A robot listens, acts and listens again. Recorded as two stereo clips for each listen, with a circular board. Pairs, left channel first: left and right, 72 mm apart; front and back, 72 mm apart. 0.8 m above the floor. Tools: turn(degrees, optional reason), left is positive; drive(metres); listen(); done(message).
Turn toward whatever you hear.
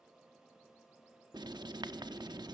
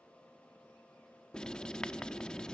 turn(degrees=-80, reason="The writing: 80° right.")
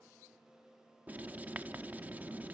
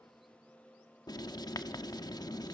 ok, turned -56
turn(degrees=-25, reason="The writing is now 25° right.")
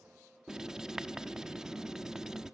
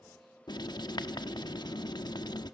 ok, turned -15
turn(degrees=-10, reason="The writing is now 10° right.")
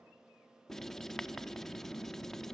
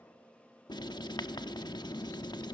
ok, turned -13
done("Found it: writing, straight ahead.")